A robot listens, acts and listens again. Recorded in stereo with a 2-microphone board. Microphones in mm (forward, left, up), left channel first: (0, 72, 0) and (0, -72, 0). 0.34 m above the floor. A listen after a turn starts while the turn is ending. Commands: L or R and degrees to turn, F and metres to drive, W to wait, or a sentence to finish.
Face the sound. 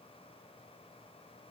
W
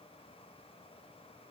W
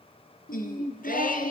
L90
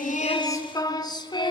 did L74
L30
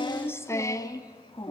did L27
L30
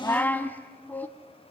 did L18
L10
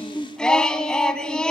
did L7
Found it: singing, straight ahead, 1 to 2 m away.